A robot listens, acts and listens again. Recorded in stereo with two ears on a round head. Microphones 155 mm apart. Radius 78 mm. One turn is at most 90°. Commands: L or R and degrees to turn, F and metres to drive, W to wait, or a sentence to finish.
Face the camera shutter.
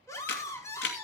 L70
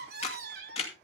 L35
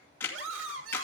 L10
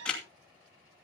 Facing the camera shutter.